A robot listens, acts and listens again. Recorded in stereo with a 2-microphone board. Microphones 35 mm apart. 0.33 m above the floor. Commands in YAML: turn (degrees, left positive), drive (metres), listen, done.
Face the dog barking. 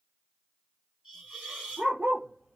turn: -50
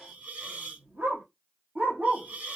turn: -80
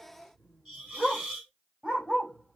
turn: -30
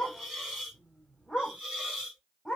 done: "Found it: a dog barking, straight ahead, 2 to 4 m away."